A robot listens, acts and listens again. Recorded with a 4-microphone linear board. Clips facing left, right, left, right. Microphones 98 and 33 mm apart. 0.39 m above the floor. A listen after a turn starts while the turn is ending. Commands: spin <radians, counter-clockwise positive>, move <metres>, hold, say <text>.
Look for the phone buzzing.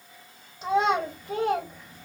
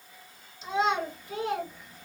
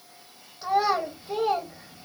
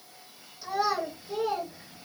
hold
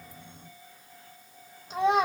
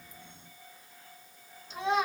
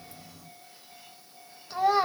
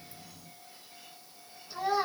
hold
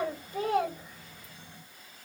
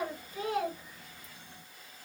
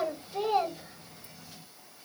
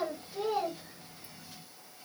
say I can't make out a phone buzzing to turn to.